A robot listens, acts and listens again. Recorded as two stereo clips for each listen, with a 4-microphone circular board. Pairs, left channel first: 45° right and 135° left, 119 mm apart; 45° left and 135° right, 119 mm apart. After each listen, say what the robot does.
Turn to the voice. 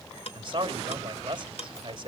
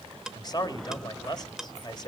Turn 95° left.
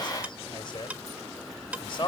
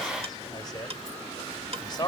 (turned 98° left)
Facing the man speaking, 1 to 2 m away.